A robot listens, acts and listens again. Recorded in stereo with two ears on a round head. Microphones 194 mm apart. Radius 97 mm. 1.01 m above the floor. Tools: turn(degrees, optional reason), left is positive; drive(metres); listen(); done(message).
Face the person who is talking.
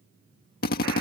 listen()
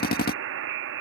listen()
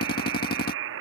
done("I can't make out anyone speaking, only a buzzer and a drill.")